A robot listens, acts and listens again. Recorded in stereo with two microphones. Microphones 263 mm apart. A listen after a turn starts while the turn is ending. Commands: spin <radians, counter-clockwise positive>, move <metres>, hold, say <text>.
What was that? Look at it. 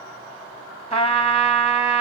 spin 0.35
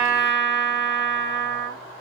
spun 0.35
spin 2.44
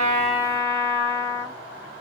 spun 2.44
spin -0.26
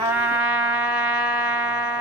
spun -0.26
say Facing the trumpet.